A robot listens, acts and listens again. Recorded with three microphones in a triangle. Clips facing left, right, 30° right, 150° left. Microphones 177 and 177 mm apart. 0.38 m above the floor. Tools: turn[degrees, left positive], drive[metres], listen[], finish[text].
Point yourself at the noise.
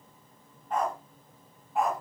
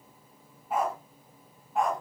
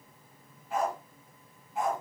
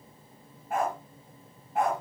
Thought: The dog barking: 175° left.
Action: turn[175]
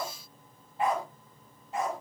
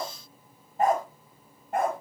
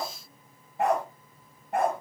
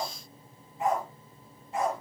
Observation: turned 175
Thought: The dog barking is now 60° right.
Action: turn[-60]
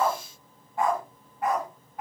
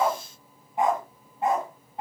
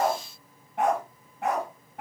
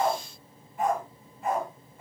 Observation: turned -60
Thought: The dog barking is now 25° right.
Action: turn[-25]
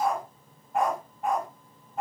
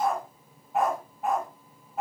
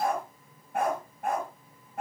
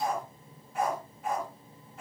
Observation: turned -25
Action: finish[Facing the dog barking, 1 to 2 m away.]